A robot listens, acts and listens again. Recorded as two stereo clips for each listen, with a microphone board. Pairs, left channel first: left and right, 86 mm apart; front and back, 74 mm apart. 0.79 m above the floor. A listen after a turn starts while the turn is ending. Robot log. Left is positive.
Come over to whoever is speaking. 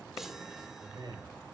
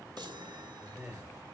note: The man speaking: 115° right.
cmd yaw -115
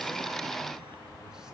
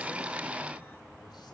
cmd idle
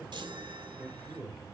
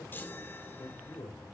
cmd fwd 1.0
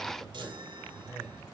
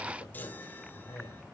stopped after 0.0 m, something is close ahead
note: The man speaking is now 10° right.
cmd yaw -10
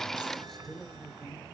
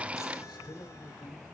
end: Something is in my way. I am facing the man speaking but have not reached it.